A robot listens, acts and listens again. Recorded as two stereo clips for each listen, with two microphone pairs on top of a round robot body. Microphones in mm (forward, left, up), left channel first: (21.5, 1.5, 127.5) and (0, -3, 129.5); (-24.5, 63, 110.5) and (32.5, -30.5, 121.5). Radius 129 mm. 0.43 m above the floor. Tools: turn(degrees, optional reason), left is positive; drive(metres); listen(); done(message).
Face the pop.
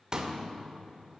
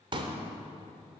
turn(degrees=-110, reason="The pop: 110° right.")
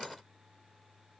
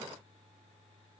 done("Facing where the pop came from. I can't hear it now.")